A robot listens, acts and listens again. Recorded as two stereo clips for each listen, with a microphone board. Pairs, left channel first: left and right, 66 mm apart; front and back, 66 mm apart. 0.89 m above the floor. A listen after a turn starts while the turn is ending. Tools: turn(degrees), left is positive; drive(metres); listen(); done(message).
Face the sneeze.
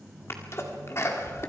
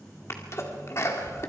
turn(degrees=45)
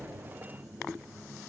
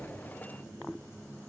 done("I heard a sneeze from this way, but can't make it out now.")